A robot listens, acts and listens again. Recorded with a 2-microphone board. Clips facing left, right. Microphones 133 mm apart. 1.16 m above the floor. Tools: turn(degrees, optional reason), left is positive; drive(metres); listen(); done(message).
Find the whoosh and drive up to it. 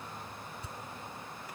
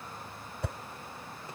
turn(degrees=-70, reason="The whoosh: about 70° right or 110° right.")
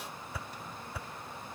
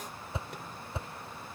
turn(degrees=-25, reason="So it is at 25° right.")
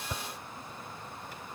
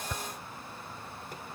turn(degrees=10, reason="The whoosh is now 10° left.")
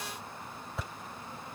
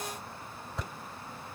drive(metres=1.0)
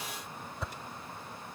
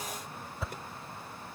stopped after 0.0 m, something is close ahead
done("Blocked. The whoosh is further on, straight ahead.")